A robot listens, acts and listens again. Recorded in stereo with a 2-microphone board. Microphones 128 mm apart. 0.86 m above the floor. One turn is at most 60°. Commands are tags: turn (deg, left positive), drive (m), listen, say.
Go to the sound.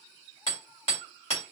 <turn deg="50"/>
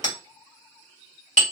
<turn deg="60"/>
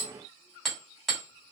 <drive m="1.0"/>
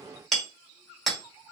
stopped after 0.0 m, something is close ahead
<say>Blocked. The hammering is further on, straight ahead.</say>